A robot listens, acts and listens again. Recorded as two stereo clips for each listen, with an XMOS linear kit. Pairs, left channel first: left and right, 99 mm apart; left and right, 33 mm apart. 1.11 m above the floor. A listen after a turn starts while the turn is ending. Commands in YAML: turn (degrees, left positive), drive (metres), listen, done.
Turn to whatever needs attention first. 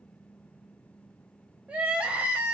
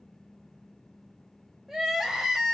turn: -30
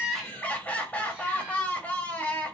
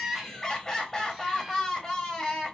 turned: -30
turn: 15
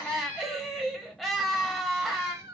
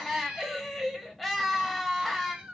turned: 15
done: "Found it: crying, straight ahead, under 1 m away."